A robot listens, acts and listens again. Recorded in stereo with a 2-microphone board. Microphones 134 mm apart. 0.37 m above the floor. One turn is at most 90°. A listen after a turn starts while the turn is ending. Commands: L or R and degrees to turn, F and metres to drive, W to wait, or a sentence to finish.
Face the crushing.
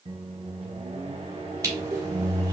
R25
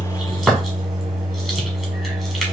W
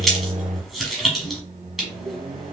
Facing the crushing, 1 to 2 m away.